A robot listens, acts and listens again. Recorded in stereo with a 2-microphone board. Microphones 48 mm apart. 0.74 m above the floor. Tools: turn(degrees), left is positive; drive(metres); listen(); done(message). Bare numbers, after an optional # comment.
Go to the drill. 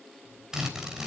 turn(-30)
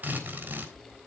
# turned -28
# So it is at 140° right.
turn(-140)
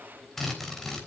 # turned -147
drive(1.0)
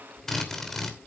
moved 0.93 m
# The drill is now 10° left.
turn(10)
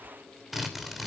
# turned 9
drive(1.0)
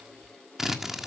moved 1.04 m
drive(1.0)
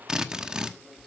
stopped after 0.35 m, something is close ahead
# The drill is now 15° right.
turn(-15)
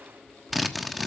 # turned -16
done("Arrived at the drill, straight ahead.")